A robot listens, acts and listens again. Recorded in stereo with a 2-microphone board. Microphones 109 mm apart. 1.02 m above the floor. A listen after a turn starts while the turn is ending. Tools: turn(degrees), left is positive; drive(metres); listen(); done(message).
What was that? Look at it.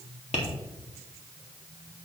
turn(degrees=90)
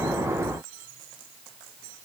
listen()
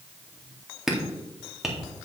done("Found it: tapping, straight ahead, 1 to 2 m away.")